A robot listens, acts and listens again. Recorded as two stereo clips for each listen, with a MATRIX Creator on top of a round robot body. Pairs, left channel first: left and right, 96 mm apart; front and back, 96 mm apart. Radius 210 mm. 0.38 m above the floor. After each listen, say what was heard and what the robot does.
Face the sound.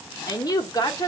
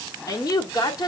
The woman speaking: 45° left. Turn 45° left.
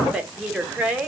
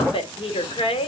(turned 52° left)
The woman speaking is now 15° right. Turn 15° right.
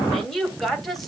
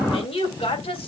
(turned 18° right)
Facing the woman speaking.